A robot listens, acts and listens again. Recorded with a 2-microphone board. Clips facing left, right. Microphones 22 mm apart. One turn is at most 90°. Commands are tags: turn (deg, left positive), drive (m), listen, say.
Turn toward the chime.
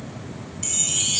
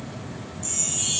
<turn deg="75"/>
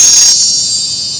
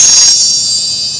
<turn deg="10"/>
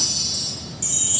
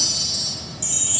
<say>Facing the chime, 1 to 2 m away.</say>